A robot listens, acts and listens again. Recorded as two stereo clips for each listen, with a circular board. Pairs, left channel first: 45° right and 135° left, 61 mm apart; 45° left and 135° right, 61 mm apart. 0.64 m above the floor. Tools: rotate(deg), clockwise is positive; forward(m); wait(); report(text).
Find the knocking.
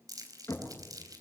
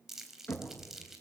rotate(10)
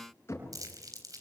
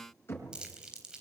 report("Facing the knocking, over 4 m away.")